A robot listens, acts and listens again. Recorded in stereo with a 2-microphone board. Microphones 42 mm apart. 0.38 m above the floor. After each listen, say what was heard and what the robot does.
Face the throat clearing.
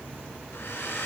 Keep listening.
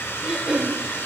The throat clearing: about 20° right or 160° right. Turn 20° right.
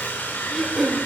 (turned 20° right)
Facing the throat clearing.